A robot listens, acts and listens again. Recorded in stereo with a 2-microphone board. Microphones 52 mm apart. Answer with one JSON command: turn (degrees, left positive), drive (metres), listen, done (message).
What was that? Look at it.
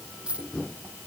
{"turn": -20}
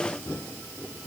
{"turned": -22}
{"listen": true}
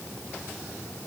{"done": "I heard a dropped coin, but can't make it out now. It was about straight ahead or 135° right."}